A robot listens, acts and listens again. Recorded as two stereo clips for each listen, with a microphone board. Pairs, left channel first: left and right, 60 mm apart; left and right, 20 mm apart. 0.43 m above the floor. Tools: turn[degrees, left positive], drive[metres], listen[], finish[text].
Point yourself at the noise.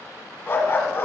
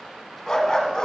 Thought: The dog barking: about 40° left or 140° left.
Action: turn[40]
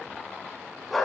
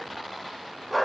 Action: finish[Facing the dog barking, 1 to 2 m away.]